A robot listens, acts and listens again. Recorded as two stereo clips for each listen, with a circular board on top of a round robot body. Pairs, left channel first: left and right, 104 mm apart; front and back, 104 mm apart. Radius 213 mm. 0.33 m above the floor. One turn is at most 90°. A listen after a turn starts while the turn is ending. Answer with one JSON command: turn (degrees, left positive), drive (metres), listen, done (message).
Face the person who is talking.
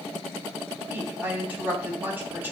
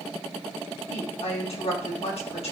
{"turn": -20}
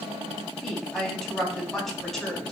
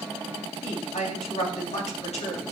{"done": "Found it: a woman speaking, straight ahead, 2 to 4 m away."}